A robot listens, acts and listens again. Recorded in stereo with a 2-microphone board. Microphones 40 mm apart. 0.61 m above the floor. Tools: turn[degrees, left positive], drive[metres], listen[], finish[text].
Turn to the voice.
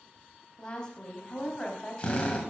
Thought: The woman speaking: about 20° left or 160° left.
Action: turn[20]
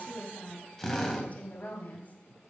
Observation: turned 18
Thought: So it is at 140° left.
Action: turn[140]
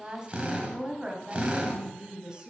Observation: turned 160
Thought: The woman speaking is now 20° right.
Action: turn[-20]
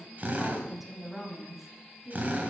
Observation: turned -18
Action: finish[Facing the woman speaking.]